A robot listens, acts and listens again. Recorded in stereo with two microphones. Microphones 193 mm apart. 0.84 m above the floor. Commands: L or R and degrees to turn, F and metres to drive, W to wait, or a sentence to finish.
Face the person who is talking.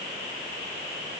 W
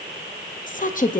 L40
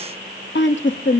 L90
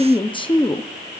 L25
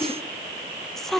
Facing the woman speaking, under 1 m away.